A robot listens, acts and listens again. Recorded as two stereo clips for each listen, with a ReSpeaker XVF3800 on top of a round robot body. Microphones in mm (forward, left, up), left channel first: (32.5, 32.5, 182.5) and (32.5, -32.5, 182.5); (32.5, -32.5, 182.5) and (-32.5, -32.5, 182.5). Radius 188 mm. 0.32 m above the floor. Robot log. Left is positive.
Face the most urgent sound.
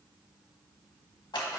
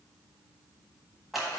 cmd idle
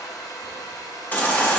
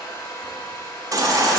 note: The baby crying: 155° left.
cmd yaw +155
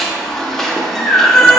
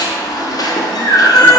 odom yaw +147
end: Facing the baby crying.